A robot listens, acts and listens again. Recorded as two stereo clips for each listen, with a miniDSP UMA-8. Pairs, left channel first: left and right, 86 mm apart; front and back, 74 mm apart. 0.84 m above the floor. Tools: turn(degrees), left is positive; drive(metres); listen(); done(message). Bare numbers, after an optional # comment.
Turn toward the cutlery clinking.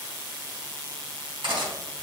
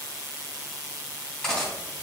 # The cutlery clinking: 80° right.
turn(-80)
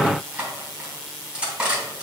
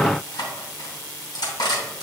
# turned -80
# The cutlery clinking is now 20° right.
turn(-20)
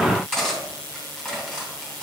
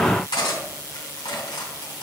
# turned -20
done("Found it: cutlery clinking, straight ahead.")